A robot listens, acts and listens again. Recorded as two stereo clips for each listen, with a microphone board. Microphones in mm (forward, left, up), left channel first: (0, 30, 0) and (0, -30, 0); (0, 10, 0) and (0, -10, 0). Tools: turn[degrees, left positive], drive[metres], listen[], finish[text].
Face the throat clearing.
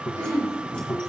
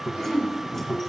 Thought: The throat clearing: about 65° right or 115° right.
Action: turn[-65]
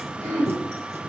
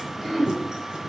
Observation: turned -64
Thought: So it is at 50° right.
Action: turn[-50]
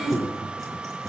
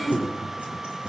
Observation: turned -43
Action: finish[Found it: throat clearing, straight ahead.]